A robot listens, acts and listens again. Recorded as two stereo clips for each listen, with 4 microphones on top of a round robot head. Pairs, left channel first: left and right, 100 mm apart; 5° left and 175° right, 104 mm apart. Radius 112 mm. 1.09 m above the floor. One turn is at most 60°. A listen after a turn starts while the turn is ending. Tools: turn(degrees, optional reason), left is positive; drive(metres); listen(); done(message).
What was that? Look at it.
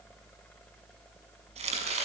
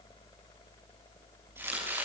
turn(degrees=-60, reason="The chopping: 105° right.")
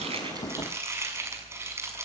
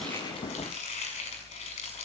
turn(degrees=-30, reason="The chopping is now 30° right.")
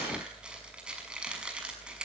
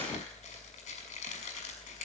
turn(degrees=-10, reason="The chopping is now 10° right.")
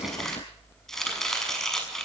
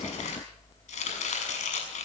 done("Facing the chopping.")